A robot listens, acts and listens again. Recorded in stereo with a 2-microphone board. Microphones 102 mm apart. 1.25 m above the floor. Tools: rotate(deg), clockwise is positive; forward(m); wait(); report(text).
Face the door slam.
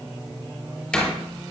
rotate(-30)
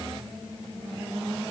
wait()
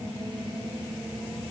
report("I heard a door slam, but can't make it out now. It was about 20° right or 140° left.")